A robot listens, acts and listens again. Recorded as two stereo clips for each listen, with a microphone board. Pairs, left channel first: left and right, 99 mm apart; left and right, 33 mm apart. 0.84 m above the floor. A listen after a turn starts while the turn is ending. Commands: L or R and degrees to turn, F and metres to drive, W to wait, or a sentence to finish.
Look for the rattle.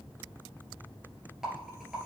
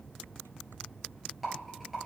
R30
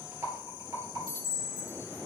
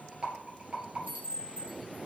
R140
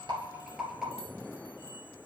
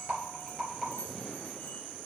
Found it: a rattle, straight ahead, 2 to 4 m away.